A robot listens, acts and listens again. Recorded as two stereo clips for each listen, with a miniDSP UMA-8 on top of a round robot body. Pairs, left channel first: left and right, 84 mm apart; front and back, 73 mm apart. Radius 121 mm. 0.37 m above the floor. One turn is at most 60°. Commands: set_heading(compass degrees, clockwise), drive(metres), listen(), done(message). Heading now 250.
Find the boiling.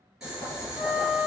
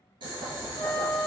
set_heading(310)
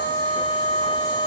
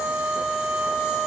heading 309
set_heading(9)
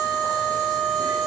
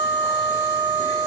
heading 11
set_heading(66)
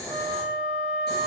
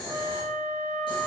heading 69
done("Found it: boiling, straight ahead.")